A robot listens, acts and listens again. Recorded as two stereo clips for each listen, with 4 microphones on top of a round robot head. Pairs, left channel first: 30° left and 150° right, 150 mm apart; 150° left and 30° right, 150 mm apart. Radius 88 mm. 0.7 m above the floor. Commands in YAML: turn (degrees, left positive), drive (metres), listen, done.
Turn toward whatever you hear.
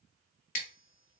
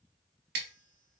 turn: -10
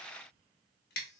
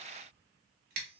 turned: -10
done: "Found it: scissors, straight ahead."